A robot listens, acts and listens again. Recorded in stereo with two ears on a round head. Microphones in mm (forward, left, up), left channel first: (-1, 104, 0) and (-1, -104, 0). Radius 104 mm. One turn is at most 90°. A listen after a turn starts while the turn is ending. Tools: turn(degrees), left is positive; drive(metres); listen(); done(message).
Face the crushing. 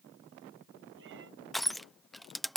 turn(degrees=30)
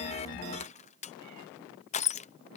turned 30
turn(degrees=90)
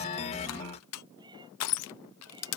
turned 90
turn(degrees=70)
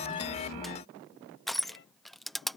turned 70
done("Facing the crushing.")